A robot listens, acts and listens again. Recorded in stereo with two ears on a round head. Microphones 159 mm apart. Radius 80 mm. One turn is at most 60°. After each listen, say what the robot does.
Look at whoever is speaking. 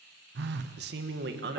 Turn 60° right.
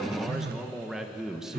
Facing the man speaking.